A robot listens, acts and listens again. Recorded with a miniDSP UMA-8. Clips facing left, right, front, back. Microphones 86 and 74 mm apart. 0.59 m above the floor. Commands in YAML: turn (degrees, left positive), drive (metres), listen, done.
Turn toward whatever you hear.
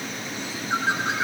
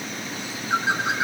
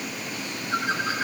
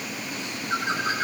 turn: -175
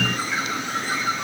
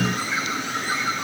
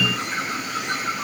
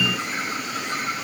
turn: -20
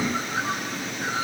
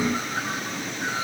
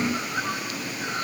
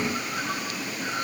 done: "Facing the bird, over 4 m away."